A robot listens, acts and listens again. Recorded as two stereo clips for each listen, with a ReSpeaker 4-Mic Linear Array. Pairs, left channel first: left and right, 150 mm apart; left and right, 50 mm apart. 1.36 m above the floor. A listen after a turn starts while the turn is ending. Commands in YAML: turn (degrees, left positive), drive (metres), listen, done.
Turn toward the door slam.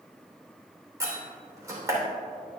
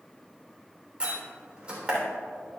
turn: -20
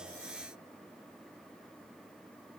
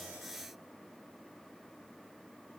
listen: true
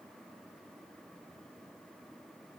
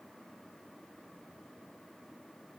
done: "I heard a door slam, but can't make it out now. It was about straight ahead or 140° right."